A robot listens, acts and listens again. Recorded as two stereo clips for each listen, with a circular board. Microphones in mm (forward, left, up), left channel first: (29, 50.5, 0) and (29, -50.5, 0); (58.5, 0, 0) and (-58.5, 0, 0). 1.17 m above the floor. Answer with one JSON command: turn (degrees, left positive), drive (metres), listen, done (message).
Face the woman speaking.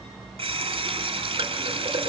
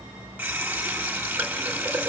{"listen": true}
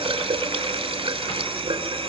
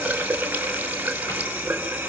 {"listen": true}
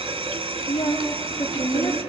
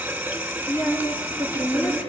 {"turn": 60}
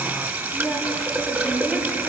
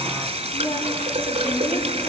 {"listen": true}
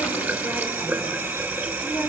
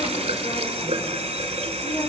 {"listen": true}
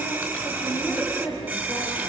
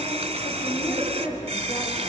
{"done": "Facing the woman speaking, over 4 m away."}